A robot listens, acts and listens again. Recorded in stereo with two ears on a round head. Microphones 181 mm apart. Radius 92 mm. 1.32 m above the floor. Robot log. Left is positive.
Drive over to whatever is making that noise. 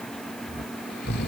note: The snoring: about 50° left or 130° left.
cmd yaw +50
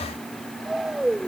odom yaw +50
cmd fwd 1.0
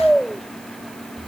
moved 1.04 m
cmd fwd 1.0
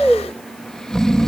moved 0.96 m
cmd fwd 1.0
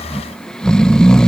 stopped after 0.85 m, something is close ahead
end: Arrived at the snoring, straight ahead.